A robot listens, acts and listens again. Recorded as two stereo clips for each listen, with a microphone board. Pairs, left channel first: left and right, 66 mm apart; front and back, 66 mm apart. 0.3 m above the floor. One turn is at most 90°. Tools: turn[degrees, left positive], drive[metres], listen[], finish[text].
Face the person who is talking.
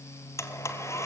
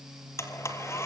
Action: listen[]
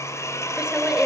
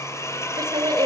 Thought: The woman speaking: 170° right.
Action: turn[-90]
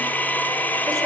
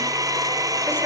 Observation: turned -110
Thought: Nothing new. It was at 60° right.
Action: turn[-60]
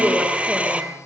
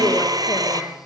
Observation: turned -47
Thought: Nothing new. It was at 10° right.
Action: turn[-10]
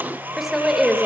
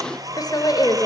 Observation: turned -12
Action: finish[Found it: a woman speaking, straight ahead.]